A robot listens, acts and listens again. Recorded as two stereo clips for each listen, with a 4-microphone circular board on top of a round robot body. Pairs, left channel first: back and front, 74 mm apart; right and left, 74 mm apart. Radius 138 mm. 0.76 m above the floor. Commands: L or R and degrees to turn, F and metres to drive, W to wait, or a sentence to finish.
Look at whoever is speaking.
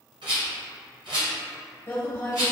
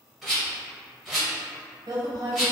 L125
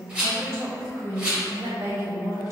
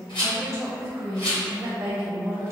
L45
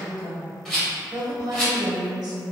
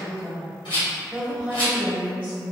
L25
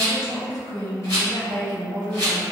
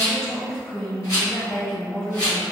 R10
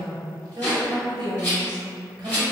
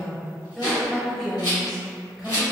Facing the woman speaking.